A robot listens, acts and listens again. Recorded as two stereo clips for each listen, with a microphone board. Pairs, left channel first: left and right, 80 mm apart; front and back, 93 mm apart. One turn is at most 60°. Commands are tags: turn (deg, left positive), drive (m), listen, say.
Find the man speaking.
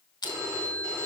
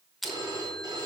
<listen/>
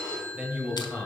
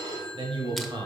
<turn deg="-60"/>
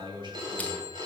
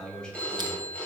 <turn deg="-60"/>
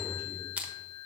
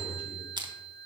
<turn deg="-20"/>
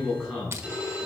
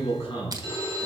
<say>Facing the man speaking, 2 to 4 m away.</say>